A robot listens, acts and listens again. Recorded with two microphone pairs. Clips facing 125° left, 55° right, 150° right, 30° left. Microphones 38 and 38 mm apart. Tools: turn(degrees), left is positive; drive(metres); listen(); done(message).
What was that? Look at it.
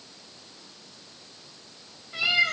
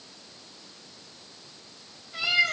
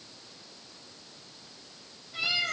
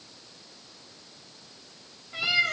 turn(degrees=75)
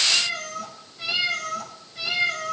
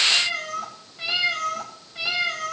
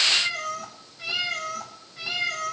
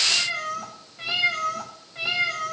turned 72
turn(degrees=10)
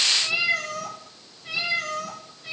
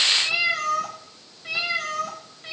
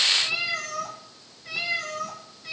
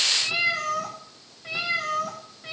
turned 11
done("Found it: a cat meowing, straight ahead, over 4 m away.")